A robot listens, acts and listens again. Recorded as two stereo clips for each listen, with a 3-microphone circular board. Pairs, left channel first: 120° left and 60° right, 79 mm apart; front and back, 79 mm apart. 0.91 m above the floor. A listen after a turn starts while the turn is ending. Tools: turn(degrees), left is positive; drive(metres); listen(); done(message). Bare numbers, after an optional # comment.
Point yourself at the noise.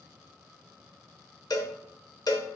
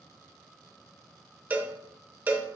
# The cowbell: 115° left.
turn(115)
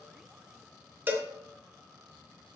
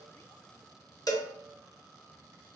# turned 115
done("Facing the cowbell, under 1 m away.")